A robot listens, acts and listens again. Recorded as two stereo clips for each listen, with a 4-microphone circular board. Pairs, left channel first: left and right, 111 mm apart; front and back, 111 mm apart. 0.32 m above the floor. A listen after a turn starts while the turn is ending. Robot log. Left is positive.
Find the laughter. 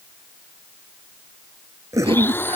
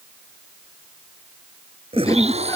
note: The laughter: 60° right.
cmd yaw -60
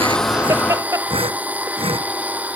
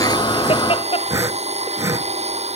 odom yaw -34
note: The laughter is now 30° right.
cmd yaw -30
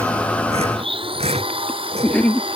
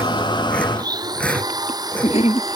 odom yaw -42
note: The laughter is now 10° left.
cmd yaw +10
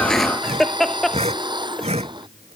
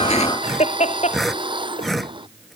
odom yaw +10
end: Found it: laughter, straight ahead.